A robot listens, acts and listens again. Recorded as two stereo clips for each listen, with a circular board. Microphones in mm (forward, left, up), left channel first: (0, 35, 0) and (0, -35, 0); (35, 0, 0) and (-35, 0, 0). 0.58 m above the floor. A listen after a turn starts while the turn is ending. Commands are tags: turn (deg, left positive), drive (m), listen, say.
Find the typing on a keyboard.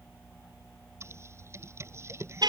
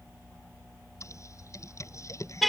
<turn deg="-40"/>
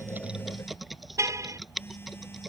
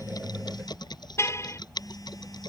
<say>Found it: typing on a keyboard, straight ahead.</say>